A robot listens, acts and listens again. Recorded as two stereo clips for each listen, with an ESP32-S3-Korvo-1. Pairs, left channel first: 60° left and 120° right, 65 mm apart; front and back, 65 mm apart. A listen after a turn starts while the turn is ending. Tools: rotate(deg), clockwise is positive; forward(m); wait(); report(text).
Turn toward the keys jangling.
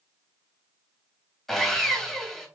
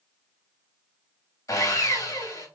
wait()
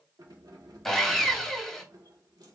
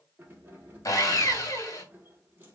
rotate(120)
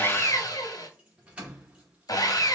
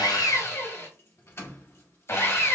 rotate(45)
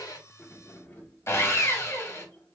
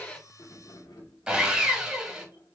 rotate(-10)
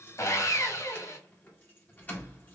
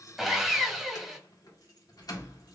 report("Found it: keys jangling, straight ahead, 1 to 2 m away.")